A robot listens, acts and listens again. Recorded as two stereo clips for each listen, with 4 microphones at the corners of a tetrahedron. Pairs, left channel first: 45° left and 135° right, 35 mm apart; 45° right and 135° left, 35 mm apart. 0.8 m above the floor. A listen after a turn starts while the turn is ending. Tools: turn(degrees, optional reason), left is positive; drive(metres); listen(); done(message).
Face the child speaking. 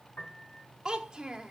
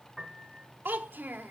turn(degrees=155, reason="The child speaking: 155° left.")
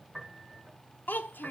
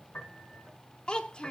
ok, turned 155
turn(degrees=20, reason="The child speaking is now 20° left.")
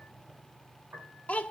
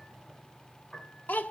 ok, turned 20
done("Facing the child speaking, 1 to 2 m away.")